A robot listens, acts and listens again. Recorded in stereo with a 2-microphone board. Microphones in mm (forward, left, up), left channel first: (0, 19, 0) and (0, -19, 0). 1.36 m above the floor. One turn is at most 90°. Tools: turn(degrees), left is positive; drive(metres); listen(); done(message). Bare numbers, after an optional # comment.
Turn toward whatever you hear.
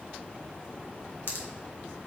# The pop: about 70° left or 110° left.
turn(70)
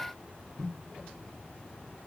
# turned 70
listen()
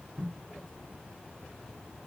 done("I heard a pop, but can't make it out now. It was about straight ahead or 40° left.")